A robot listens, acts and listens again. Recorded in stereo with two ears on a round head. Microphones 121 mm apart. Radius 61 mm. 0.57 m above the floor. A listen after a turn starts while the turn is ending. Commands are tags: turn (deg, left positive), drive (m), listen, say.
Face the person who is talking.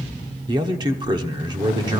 <turn deg="-35"/>
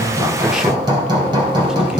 <listen/>
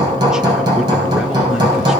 <listen/>
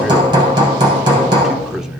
<say>Found it: a man speaking, straight ahead.</say>